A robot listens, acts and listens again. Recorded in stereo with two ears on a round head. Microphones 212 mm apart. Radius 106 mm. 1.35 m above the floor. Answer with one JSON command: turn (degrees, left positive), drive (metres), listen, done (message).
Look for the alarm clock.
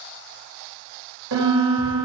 {"listen": true}
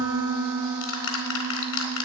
{"listen": true}
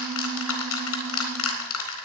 {"done": "I can't make out an alarm clock to turn to."}